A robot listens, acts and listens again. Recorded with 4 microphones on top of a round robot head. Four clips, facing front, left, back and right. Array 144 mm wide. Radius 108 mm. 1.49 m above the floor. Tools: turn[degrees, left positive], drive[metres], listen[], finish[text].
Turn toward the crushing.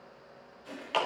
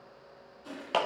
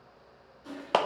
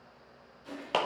Thought: The crushing: 150° left.
Action: turn[150]
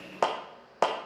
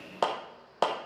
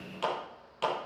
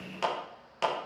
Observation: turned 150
Action: listen[]
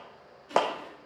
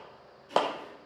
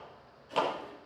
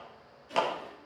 Action: finish[Facing the crushing.]